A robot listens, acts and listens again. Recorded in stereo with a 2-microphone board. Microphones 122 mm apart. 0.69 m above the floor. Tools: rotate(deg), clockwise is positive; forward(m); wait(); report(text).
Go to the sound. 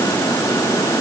wait()
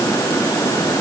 wait()
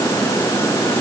report("I can't make out anything.")